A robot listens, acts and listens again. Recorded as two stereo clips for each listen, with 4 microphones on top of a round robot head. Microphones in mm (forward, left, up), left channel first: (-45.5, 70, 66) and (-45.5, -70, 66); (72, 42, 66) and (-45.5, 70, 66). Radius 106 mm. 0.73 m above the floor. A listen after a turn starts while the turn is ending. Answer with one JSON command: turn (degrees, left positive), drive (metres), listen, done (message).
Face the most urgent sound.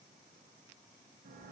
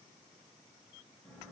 {"listen": true}
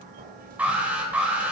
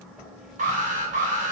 {"turn": -170}
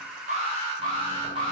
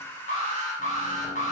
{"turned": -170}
{"turn": -30}
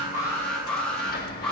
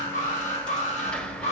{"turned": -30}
{"done": "Facing the alarm."}